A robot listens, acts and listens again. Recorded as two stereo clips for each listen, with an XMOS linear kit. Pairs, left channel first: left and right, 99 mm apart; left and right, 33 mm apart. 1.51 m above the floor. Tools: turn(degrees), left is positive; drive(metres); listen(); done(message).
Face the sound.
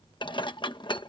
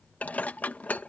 turn(degrees=60)
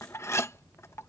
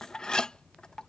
turn(degrees=35)
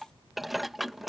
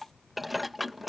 done("Found it: dishes clattering, straight ahead.")